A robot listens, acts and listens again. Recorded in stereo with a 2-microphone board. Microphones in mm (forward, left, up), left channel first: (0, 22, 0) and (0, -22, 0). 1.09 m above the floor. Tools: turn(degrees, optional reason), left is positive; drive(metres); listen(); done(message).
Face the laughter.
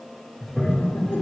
turn(degrees=60, reason="The laughter: about 60° left or 120° left.")
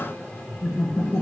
turn(degrees=65, reason="So it is at 65° left.")
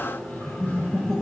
done("Found it: laughter, straight ahead.")